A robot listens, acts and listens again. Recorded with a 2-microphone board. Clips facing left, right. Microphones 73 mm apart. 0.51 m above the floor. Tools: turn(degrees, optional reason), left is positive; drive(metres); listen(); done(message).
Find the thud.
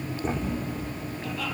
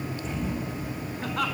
turn(degrees=45, reason="The thud: about 45° left or 135° left.")
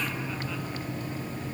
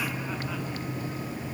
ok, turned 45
listen()
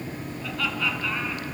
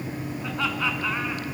done("I heard a thud, but can't make it out now. It was about straight ahead or 90° left.")